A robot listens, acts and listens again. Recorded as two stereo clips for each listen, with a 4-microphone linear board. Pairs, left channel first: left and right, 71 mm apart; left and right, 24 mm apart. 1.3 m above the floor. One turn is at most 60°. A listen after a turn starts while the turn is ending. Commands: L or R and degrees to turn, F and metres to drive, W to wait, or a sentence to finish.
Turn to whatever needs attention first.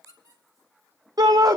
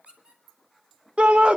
R60
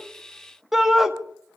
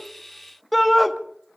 Found it: a shout, straight ahead.